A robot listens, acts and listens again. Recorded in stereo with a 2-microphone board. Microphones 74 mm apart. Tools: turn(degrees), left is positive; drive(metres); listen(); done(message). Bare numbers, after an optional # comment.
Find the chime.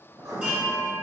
# The chime: about 20° right or 160° right.
turn(-20)
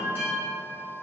# So it is at 140° right.
turn(-140)
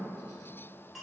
done("Found it: a chime, straight ahead, 1 to 2 m away.")